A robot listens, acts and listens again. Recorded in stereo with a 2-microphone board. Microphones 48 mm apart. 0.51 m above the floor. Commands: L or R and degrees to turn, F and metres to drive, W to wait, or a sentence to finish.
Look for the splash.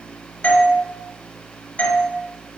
W
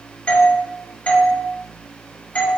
W
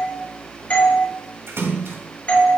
R70
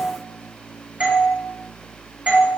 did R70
W
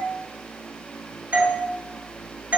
I heard a splash, but can't make it out now. It was about straight ahead or 40° right.